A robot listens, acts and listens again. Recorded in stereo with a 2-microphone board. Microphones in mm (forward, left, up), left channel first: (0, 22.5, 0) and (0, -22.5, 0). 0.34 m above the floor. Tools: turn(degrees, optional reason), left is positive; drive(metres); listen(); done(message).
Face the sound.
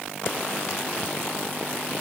listen()
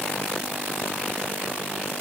listen()
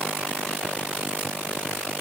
done("I can't make out anything to turn to.")